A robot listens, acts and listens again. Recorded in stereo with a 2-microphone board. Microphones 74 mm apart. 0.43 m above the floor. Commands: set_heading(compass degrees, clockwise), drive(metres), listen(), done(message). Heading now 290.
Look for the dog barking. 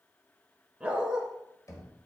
set_heading(320)
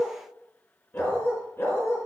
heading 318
set_heading(278)
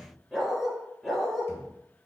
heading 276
done("Found it: a dog barking, straight ahead.")